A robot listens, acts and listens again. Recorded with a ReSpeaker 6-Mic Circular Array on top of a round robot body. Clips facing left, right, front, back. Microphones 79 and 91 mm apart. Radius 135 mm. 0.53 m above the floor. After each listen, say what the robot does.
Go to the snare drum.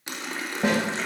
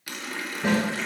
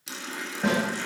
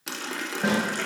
Turn 90° left.
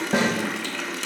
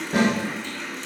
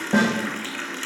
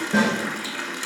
Turn 40° left.
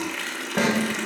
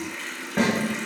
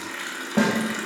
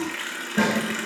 Turn 10° left.
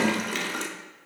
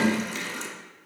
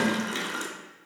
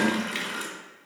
Keep listening.
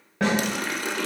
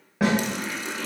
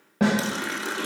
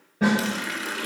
Drive 1.0 m forward.
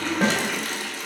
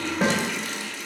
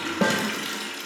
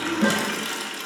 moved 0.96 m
Drive 1.0 m forward.
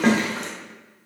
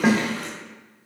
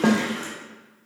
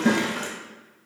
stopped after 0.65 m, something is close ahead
I am next to the snare drum.